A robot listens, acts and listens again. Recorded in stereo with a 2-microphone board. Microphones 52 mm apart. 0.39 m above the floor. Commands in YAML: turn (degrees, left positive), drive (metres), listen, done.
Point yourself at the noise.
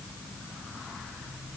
listen: true
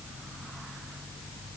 listen: true
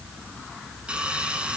turn: -20
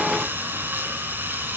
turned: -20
turn: -140
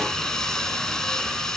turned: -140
turn: 10
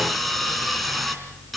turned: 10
done: "Facing the sawing, 2 to 4 m away."